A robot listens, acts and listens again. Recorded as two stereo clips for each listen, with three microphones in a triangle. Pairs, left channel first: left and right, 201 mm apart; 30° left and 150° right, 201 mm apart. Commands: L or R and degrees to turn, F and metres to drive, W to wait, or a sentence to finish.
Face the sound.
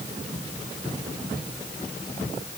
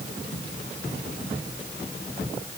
W
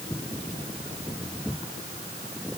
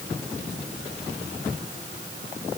W
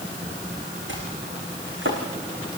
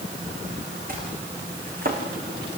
R105
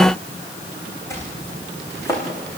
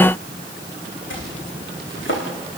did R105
L15
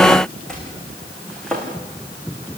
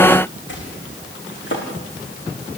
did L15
Facing the chopping, over 4 m away.